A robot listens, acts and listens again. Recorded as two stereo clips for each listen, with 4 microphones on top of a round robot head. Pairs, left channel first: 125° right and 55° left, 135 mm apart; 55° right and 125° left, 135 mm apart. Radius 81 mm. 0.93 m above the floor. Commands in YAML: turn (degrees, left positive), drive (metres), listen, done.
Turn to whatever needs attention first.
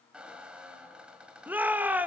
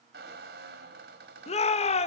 turn: -25
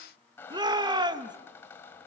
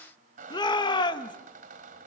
done: "Found it: a shout, straight ahead, 1 to 2 m away."